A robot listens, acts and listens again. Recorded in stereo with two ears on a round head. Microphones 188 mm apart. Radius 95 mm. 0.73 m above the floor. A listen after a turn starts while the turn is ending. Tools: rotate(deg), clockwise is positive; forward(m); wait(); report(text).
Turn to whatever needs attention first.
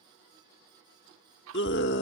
rotate(-55)
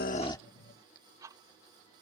wait()
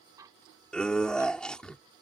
report("Facing the scream.")